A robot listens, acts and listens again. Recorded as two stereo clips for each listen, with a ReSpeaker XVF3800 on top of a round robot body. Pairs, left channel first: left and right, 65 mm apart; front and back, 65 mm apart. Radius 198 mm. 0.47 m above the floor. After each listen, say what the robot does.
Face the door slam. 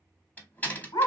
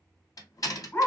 Turn 25° left.
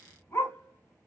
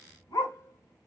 Facing where the door slam came from. I can't hear it now.